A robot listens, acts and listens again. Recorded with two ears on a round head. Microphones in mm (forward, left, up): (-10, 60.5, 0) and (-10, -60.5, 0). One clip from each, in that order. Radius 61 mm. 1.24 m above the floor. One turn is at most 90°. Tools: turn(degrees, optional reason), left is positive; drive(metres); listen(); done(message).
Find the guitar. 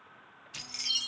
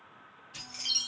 listen()
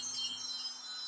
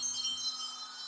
listen()
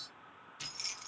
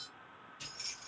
done("I can't make out a guitar to turn to.")